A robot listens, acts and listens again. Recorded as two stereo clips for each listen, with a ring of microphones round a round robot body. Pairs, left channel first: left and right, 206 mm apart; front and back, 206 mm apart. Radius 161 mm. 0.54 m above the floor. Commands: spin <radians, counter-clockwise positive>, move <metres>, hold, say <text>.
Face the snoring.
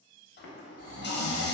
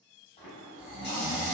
spin -1.66
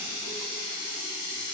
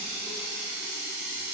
hold
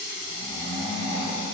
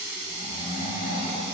spin -0.17
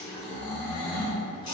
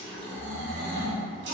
say Found it: snoring, straight ahead.